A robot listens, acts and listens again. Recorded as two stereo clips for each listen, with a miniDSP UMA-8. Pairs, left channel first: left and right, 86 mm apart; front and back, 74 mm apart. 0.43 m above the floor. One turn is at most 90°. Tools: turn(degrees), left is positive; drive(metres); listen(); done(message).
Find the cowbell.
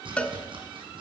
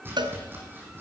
turn(degrees=90)
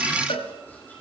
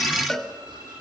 turn(degrees=85)
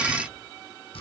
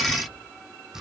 listen()
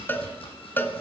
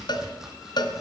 turn(degrees=20)
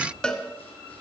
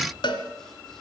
turn(degrees=10)
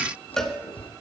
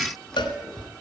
done("Found it: a cowbell, straight ahead.")